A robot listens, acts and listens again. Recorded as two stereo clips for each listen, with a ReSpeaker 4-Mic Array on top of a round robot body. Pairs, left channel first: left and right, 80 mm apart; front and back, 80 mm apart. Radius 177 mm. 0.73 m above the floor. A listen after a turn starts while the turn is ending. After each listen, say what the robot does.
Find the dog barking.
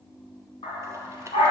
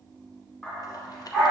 Turn 95° left.
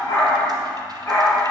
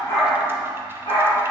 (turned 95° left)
Turn 25° left.
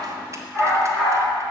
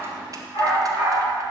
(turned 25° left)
Turn 15° left.
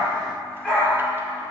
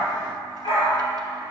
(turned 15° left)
Turn 10° left.
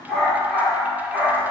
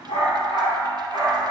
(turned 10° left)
Facing the dog barking, over 4 m away.